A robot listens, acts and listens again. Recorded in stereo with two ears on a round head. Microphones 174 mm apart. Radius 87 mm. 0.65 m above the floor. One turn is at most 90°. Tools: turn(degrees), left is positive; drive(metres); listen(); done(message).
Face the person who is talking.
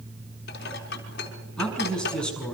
turn(degrees=30)
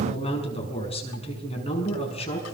turn(degrees=90)
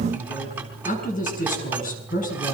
turn(degrees=45)
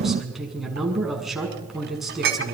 done("Facing the man speaking.")